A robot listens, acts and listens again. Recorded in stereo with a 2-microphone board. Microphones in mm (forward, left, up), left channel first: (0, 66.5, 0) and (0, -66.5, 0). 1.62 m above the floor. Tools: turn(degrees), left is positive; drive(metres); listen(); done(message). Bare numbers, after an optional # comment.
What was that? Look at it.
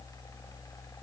listen()
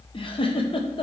# The giggle: about 40° left or 140° left.
turn(40)
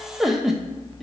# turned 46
done("Found it: a giggle, straight ahead, under 1 m away.")